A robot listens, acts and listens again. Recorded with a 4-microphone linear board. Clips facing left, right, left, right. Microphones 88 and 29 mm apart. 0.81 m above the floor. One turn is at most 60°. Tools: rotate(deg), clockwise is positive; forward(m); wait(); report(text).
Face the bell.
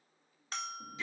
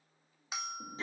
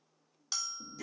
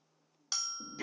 rotate(30)
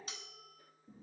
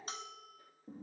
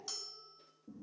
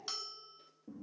rotate(60)
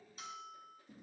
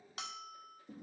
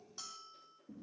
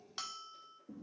rotate(60)
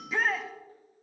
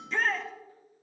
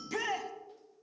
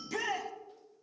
rotate(25)
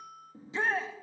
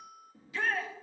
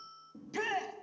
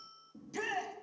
report("Facing the bell.")